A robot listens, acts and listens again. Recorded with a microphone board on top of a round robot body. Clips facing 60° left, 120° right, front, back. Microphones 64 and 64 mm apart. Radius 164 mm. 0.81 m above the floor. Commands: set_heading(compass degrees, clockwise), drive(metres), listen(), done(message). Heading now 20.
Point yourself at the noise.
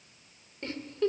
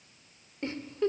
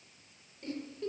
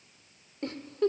set_heading(210)
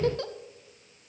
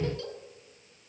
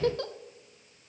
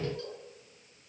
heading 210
set_heading(180)
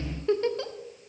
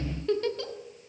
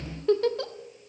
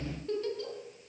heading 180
done("Facing the giggle, 1 to 2 m away.")